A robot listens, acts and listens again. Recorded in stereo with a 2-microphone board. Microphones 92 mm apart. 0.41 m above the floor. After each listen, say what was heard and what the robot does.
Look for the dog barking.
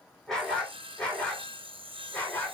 The dog barking: about 20° left or 160° left. Turn 20° left.
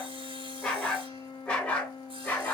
The dog barking: about 20° left or 160° left. Turn 20° left.
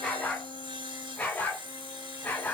Turn 30° left.
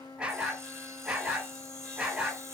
So it is at 15° right. Turn 15° right.
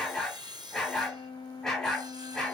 Facing the dog barking.